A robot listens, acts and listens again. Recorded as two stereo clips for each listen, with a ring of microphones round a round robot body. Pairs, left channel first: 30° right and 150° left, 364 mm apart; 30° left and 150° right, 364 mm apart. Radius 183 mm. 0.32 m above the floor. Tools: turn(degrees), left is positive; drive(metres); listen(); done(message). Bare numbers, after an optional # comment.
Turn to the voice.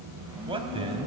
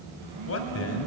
# The man speaking: 75° left.
turn(75)
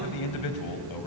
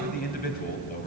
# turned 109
# The man speaking is now 30° right.
turn(-30)
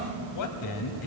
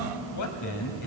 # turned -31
done("Found it: a man speaking, straight ahead, 1 to 2 m away.")